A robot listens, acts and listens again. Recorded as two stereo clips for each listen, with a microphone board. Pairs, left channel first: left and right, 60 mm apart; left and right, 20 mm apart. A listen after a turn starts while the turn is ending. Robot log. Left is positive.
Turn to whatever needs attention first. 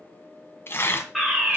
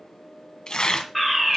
cmd yaw +30
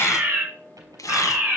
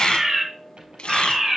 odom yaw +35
note: So it is at 35° right.
cmd yaw -35
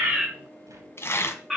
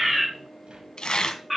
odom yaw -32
end: Found it: a fire alarm, straight ahead.